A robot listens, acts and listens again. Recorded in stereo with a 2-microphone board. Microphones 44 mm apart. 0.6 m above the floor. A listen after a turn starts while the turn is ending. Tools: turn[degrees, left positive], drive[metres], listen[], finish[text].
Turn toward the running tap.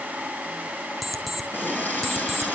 Thought: The running tap: about 40° left or 140° left.
Action: turn[40]
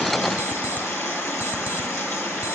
Thought: So it is at 100° left.
Action: turn[100]
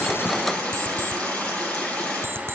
Thought: The running tap is now 25° left.
Action: turn[25]
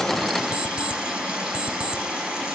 Thought: The running tap is now 15° right.
Action: turn[-15]
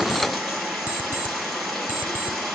Action: finish[Facing the running tap.]